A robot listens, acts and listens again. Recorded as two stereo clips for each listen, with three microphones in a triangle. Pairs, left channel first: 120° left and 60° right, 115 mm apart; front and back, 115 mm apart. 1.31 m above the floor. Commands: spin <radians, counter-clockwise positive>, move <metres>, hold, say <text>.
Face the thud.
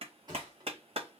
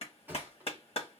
spin -1.92
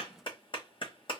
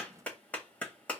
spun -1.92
say Facing where the thud came from. I can't hear it now.